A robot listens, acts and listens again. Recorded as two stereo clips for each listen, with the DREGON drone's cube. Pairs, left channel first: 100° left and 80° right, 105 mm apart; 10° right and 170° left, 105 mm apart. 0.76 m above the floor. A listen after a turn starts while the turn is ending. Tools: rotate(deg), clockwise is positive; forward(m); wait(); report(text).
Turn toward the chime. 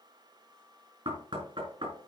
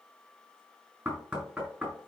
wait()
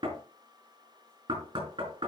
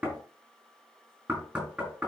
wait()
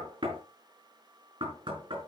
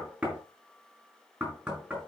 report("I can't make out a chime, only knocking.")